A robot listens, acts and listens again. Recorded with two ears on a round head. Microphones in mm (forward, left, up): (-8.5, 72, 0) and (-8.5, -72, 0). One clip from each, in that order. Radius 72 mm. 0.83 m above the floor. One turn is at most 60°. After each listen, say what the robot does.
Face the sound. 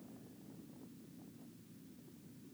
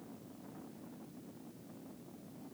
Keep listening.
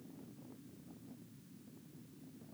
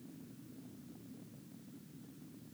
Keep listening.
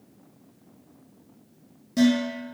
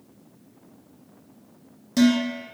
Turn 25° right.
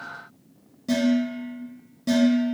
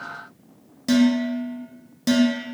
Turn 60° right.
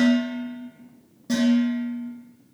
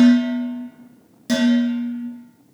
Turn 60° right.
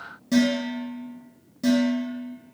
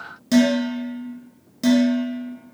Turn 35° right.
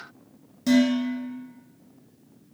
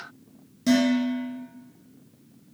Facing the dishes clattering.